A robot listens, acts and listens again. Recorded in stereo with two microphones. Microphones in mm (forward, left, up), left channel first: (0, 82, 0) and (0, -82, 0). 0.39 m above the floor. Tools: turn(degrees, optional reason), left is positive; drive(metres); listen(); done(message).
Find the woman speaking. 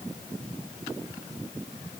listen()
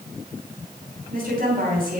turn(degrees=-65, reason="The woman speaking: about 65° right or 115° right.")
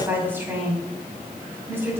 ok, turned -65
turn(degrees=-15, reason="So it is at 15° right.")
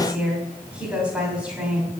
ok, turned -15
turn(degrees=-10, reason="The woman speaking is now 10° right.")
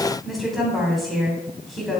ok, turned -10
done("Found it: a woman speaking, straight ahead, 2 to 4 m away.")